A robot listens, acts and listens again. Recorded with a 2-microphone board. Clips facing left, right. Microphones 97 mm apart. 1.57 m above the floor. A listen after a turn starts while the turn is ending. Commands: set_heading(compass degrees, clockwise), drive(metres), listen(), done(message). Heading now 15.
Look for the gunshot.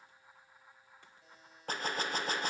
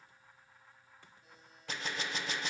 set_heading(330)
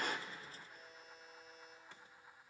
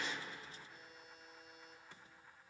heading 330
listen()
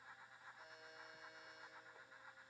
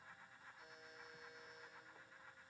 done("I heard a gunshot, but can't make it out now. It was about straight ahead or 90° left.")